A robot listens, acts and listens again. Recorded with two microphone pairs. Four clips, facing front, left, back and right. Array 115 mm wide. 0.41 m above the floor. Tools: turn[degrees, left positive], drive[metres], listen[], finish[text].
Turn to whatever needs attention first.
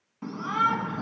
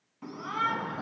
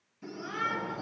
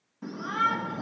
Thought: The shout: 10° left.
Action: turn[10]
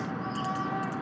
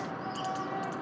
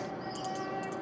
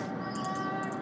Action: finish[Facing the shout.]